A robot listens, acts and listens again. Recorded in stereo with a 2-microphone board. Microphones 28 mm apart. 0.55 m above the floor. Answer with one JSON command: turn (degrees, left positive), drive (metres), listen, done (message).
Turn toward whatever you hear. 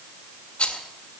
{"turn": 40}
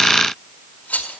{"turn": 95}
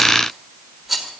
{"done": "Found it: a rattle, straight ahead, 2 to 4 m away."}